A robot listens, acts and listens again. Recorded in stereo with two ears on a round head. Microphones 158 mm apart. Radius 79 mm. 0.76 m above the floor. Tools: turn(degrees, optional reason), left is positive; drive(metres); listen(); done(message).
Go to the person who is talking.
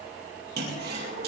listen()
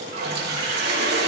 listen()
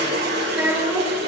turn(degrees=-30)
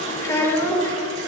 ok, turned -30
turn(degrees=15, reason="So it is at 15° left.")
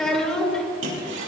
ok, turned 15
drive(metres=1.0)
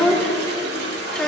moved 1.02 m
drive(metres=1.0)
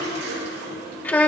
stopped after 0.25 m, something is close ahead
turn(degrees=10, reason="The child speaking is now 10° left.")
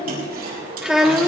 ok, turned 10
done("Arrived at the child speaking, straight ahead.")